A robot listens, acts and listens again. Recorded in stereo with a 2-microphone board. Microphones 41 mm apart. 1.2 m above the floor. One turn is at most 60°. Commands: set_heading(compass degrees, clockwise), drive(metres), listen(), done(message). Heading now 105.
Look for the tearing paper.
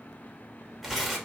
set_heading(135)
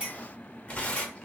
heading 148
set_heading(113)
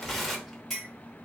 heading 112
done("Found it: tearing paper, straight ahead, under 1 m away.")